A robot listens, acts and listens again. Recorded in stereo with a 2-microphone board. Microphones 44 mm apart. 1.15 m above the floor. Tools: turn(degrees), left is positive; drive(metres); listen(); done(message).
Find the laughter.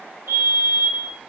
listen()
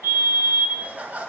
turn(degrees=-40)
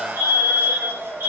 turn(degrees=-100)
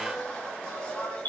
turn(degrees=20)
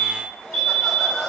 turn(degrees=10)
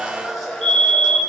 done("Found it: laughter, straight ahead.")